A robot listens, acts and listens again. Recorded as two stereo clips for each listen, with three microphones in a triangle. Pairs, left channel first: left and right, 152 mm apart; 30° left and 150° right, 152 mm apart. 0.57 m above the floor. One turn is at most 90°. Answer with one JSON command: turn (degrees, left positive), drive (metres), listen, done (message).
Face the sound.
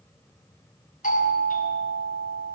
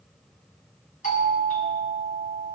{"turn": 60}
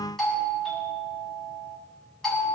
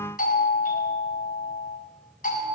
{"done": "Facing the doorbell."}